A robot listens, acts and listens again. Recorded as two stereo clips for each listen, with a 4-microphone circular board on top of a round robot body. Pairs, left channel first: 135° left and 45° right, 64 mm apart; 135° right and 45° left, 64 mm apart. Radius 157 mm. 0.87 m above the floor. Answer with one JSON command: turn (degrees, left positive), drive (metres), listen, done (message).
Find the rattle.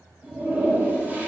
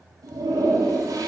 {"listen": true}
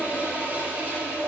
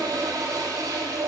{"listen": true}
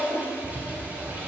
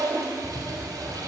{"turn": -75}
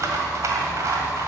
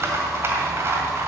{"done": "Facing the rattle."}